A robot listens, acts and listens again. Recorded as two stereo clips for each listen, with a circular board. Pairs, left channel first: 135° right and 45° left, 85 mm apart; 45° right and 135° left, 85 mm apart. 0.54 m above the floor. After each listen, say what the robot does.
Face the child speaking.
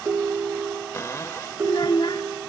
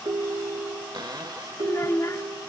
Turn 100° right.
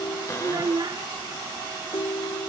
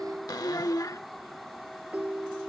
Facing the child speaking.